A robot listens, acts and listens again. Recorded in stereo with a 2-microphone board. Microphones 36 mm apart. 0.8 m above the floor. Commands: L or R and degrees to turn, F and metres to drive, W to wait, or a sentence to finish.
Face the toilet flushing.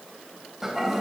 R30
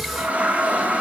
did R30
R140
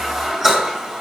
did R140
R15
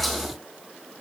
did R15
W
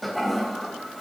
Facing the toilet flushing.